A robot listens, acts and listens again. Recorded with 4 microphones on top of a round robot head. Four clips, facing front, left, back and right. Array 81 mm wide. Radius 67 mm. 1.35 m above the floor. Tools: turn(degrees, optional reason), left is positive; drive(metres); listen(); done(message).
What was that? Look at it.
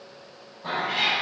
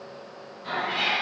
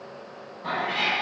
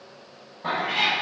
turn(degrees=-90, reason="The cat meowing: 90° right.")
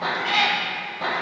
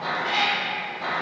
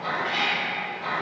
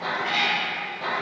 turn(degrees=15, reason="The cat meowing is now 15° left.")
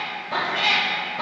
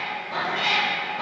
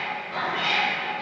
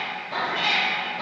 turn(degrees=15, reason="The cat meowing is now 15° left.")
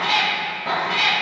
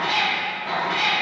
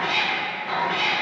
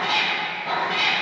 turn(degrees=10, reason="The cat meowing is now 10° left.")
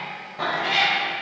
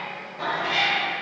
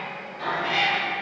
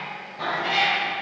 turn(degrees=10, reason="The cat meowing is now 10° left.")
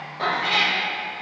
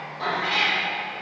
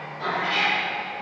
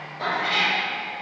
done("Found it: a cat meowing, straight ahead, 2 to 4 m away.")